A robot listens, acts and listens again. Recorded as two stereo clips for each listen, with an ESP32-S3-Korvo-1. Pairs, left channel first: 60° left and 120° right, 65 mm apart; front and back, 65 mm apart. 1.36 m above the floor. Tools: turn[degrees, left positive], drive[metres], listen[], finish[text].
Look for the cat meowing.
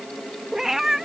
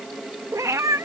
Thought: The cat meowing: 155° left.
Action: turn[155]
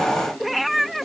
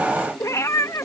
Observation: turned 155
Thought: The cat meowing is now 30° right.
Action: turn[-30]
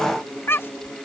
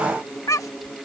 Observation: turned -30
Thought: The cat meowing is now 15° left.
Action: turn[15]
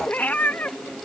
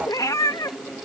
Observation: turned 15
Action: finish[Facing the cat meowing.]